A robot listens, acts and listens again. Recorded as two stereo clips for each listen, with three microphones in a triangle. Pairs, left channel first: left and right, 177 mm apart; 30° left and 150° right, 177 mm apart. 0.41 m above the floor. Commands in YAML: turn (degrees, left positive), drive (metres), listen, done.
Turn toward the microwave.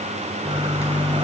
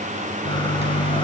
turn: 15
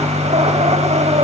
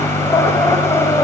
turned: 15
done: "Found it: a microwave, straight ahead, over 4 m away."